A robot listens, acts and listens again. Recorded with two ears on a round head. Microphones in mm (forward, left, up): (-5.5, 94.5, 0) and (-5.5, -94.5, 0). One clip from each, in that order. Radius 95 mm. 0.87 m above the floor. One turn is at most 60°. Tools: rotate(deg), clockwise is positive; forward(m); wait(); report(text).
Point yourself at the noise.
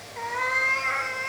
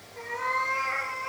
rotate(-50)
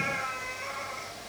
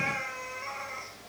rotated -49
report("Found it: a cat meowing, straight ahead.")